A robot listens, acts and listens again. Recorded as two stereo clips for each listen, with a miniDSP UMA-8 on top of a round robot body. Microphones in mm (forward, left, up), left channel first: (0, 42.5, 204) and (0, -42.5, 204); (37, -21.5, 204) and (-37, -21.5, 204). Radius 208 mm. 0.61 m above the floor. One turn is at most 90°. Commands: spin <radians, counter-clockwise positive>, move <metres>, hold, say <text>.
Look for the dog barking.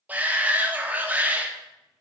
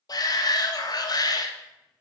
hold
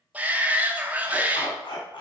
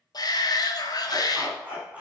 spin 1.57
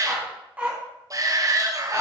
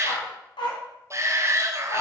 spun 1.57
spin -0.44
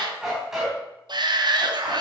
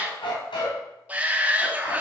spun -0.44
say Facing the dog barking, 2 to 4 m away.